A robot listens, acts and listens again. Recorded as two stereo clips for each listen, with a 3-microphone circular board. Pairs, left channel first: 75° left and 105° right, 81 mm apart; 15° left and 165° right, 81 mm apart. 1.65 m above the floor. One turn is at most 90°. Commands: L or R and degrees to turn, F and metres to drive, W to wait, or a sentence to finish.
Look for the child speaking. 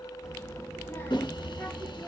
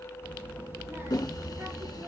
L90
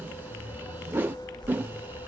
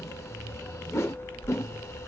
L80
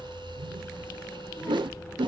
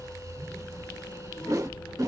L15
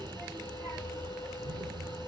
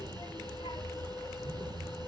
Found it: a child speaking, straight ahead.